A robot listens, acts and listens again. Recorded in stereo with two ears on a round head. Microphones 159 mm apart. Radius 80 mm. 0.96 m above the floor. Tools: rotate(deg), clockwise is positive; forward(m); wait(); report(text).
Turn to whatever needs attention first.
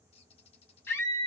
rotate(-30)
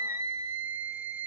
rotate(15)
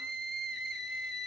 report("Facing the scream.")